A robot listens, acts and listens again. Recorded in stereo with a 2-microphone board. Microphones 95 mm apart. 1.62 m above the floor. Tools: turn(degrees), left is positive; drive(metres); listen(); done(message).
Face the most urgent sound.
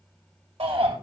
turn(degrees=-90)
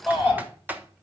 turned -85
done("Facing the shout.")